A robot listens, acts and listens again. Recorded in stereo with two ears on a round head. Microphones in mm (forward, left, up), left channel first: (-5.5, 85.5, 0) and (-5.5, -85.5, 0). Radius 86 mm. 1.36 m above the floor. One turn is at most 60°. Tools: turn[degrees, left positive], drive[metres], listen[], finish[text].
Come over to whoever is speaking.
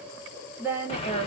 Action: turn[-30]
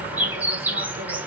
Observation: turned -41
Action: listen[]
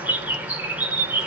Action: listen[]
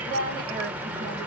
Thought: So it is at 130° right.
Action: turn[-60]
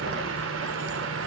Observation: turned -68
Thought: Nothing new. It was at 60° right.
Action: turn[-60]
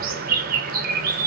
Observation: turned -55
Action: listen[]
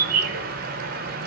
Action: finish[I heard a woman speaking from this way, but can't make it out now. I did not reach it.]